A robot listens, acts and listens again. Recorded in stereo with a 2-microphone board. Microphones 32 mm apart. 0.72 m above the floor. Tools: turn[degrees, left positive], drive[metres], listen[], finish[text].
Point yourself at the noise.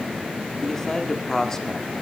Action: turn[30]
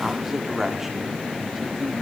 Thought: So it is at 15° right.
Action: turn[-15]
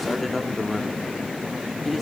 Action: finish[Facing the man speaking, 1 to 2 m away.]